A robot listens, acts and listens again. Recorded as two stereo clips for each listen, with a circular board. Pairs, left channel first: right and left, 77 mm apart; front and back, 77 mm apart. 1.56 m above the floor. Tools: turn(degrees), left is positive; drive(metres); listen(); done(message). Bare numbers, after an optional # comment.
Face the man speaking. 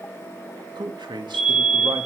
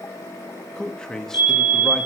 # The man speaking: 85° left.
turn(85)
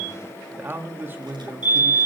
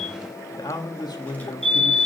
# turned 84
# The man speaking is now 30° left.
turn(30)
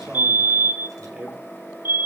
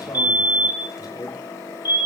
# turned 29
# The man speaking is now 15° left.
turn(15)
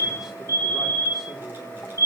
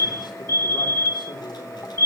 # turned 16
listen()
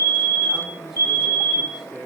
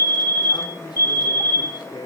done("Found it: a man speaking, straight ahead.")